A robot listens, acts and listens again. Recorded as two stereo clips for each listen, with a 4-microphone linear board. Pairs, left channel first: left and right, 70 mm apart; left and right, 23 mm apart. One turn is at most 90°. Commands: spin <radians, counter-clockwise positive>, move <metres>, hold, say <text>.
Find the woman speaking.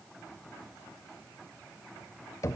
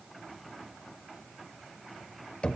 hold
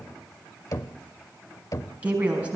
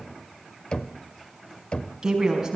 spin -0.35
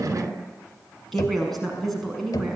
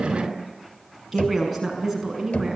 say Found it: a woman speaking, straight ahead.